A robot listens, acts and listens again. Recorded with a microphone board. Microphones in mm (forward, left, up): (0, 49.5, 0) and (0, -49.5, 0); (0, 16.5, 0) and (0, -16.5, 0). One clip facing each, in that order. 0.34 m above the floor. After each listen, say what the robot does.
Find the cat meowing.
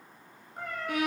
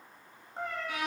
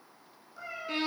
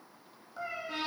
Turn 25° right.
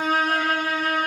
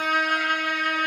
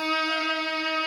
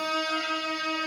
Keep listening.
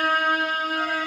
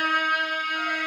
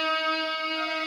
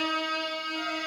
Keep listening.
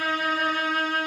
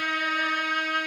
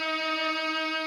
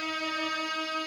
I heard a cat meowing, but can't make it out now. It was about straight ahead or 130° right.